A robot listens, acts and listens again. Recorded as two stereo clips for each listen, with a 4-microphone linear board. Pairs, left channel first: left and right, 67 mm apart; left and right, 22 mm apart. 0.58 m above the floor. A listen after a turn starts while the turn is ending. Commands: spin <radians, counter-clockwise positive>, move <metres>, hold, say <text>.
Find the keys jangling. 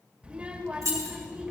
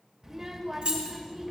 spin -0.96
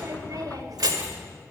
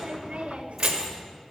spin -0.17
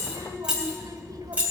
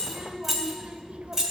spin -0.35
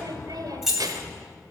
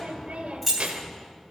say Facing the keys jangling, 2 to 4 m away.